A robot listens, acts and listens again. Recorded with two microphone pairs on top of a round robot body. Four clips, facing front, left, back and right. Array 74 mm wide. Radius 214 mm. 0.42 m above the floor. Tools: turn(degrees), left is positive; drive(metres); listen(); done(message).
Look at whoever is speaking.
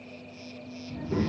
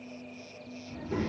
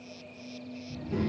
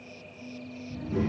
turn(degrees=45)
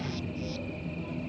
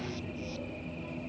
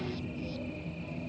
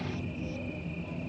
turn(degrees=15)
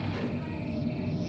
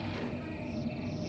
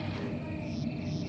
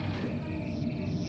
done("Facing the child speaking, under 1 m away.")